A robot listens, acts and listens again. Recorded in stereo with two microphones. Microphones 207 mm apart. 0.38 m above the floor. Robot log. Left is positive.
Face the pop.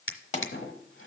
note: The pop: about 30° left or 150° left.
cmd yaw +30
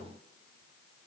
cmd idle
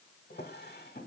end: I heard a pop, but can't make it out now. It was about straight ahead or 120° left.